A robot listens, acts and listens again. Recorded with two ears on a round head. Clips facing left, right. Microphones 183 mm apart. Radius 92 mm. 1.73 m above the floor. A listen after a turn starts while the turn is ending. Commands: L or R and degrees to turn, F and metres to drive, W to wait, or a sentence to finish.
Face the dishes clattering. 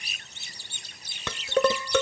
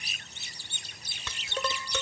L55
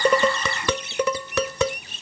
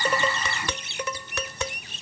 L65
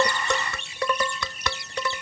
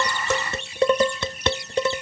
R25
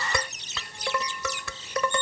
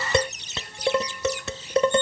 R25
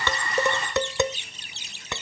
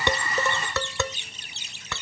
L15
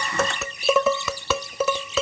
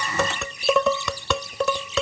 Found it: dishes clattering, straight ahead.